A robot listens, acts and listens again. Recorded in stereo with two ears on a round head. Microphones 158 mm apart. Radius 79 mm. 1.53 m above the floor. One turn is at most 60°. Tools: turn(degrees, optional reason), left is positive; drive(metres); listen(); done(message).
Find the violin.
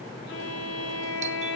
turn(degrees=60, reason="The violin: about 65° left or 115° left.")
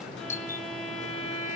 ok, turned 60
done("Facing the violin.")